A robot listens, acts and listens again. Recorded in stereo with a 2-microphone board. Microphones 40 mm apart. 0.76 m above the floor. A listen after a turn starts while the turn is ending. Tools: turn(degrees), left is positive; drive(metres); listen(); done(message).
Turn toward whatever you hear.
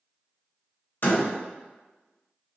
turn(degrees=55)
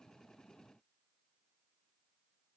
listen()
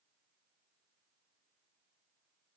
done("I heard a door slam, but can't make it out now. It was about straight ahead or 70° left.")